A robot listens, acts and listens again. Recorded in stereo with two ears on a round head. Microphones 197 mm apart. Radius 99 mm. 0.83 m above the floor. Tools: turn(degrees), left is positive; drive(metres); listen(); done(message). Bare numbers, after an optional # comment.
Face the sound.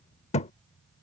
# The thud: about 30° left or 150° left.
turn(30)
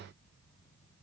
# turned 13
listen()
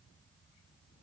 done("I heard a thud, but can't make it out now. It was about 15° left or 140° left.")